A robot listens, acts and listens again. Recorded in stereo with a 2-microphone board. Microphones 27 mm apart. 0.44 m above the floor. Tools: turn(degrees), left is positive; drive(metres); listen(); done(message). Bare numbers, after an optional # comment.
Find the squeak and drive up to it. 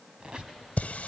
# The squeak: about 30° right or 150° right.
turn(-30)
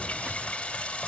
listen()
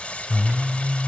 listen()
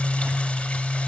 done("I heard a squeak, but can't make it out now. It was about straight ahead or 120° right. I did not reach it.")